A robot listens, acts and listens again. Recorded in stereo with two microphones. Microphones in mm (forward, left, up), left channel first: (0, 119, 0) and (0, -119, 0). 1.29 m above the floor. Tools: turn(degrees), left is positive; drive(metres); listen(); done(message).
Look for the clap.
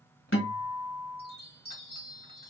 listen()
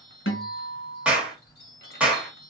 turn(degrees=-30)
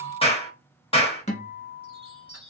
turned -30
turn(degrees=25)
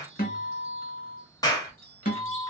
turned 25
turn(degrees=15)
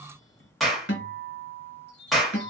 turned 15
done("Facing the clap.")